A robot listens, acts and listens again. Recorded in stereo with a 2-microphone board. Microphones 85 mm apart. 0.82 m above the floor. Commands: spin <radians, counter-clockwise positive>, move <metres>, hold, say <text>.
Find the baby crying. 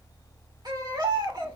spin -1.05
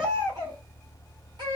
spin -1.05
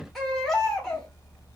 say Facing the baby crying.